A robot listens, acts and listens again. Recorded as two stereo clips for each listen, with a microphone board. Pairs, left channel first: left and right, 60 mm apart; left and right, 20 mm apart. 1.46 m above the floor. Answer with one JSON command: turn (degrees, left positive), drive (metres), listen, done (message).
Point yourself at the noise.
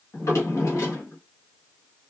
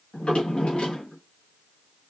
{"turn": 60}
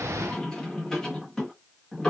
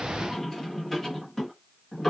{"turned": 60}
{"turn": 15}
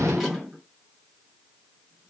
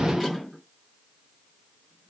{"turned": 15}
{"done": "Facing the drawer."}